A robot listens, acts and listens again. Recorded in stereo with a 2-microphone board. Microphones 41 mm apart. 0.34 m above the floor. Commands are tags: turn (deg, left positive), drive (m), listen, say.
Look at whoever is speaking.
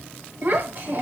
<turn deg="-55"/>
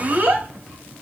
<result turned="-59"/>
<turn deg="-55"/>
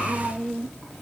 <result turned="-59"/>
<say>Found it: a child speaking, straight ahead, 1 to 2 m away.</say>